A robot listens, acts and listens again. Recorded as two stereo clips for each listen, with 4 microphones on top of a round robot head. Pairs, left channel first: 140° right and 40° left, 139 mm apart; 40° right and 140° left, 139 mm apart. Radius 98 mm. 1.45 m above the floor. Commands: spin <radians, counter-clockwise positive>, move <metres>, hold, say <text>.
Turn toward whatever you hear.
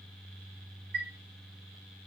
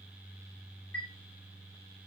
spin 0.61
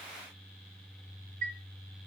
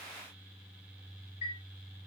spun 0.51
say Found it: a chime, straight ahead, 2 to 4 m away.